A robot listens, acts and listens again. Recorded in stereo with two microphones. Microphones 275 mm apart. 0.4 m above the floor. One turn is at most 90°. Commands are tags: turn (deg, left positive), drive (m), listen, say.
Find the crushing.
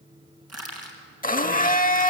<turn deg="-70"/>
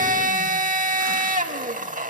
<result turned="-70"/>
<listen/>
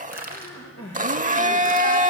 <turn deg="-35"/>
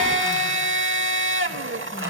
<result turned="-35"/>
<listen/>
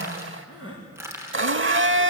<turn deg="-10"/>
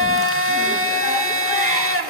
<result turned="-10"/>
<listen/>
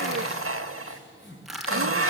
<say>Facing the crushing, 2 to 4 m away.</say>